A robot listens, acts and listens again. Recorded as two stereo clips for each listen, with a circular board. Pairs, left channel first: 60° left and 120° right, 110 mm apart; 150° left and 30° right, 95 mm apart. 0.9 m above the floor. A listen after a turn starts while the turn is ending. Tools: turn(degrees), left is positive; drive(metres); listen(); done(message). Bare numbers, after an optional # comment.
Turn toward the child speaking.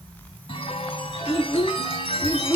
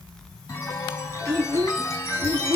# The child speaking: 10° left.
turn(10)
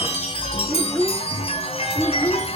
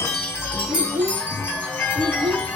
# The child speaking is now 15° right.
turn(-15)
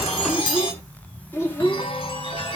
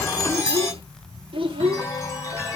# The child speaking is now 10° right.
turn(-10)
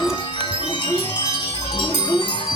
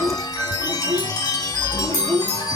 done("Facing the child speaking.")